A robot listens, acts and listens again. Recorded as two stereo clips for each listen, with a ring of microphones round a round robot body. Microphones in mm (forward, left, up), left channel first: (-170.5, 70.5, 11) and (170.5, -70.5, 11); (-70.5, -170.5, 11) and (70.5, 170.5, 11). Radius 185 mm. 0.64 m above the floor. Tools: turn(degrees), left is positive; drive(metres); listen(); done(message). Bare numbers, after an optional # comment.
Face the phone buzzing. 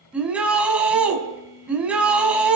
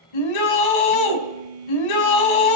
# The phone buzzing: 60° left.
turn(60)
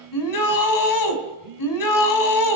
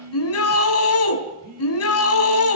done("Found it: a phone buzzing, straight ahead.")